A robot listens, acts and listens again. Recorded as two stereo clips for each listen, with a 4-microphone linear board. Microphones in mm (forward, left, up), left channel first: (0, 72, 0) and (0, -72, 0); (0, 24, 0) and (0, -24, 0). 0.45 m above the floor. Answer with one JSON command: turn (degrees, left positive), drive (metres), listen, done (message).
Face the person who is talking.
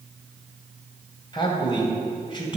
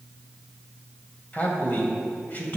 {"turn": 35}
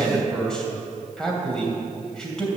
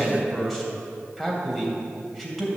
{"done": "Found it: a man speaking, straight ahead."}